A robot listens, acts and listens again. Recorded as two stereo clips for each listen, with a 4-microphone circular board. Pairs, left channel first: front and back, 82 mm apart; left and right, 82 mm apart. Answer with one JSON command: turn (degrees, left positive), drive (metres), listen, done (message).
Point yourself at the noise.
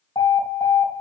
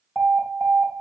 {"done": "Found it: an alarm, straight ahead, 2 to 4 m away."}